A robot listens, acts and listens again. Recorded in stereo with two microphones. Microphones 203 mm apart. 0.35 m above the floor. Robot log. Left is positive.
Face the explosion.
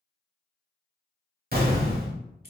note: The explosion: about 50° right or 130° right.
cmd yaw -50
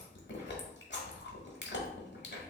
cmd idle
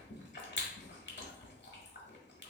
end: I heard an explosion, but can't make it out now. It was about straight ahead or 80° right.